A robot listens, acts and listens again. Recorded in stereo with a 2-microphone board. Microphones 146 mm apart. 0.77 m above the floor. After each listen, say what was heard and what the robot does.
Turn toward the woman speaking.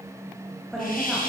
Turn 30° left.
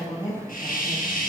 So it is at 155° left. Turn 155° left.
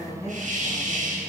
The woman speaking is now 20° left. Turn 20° left.
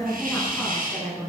Found it: a woman speaking, straight ahead.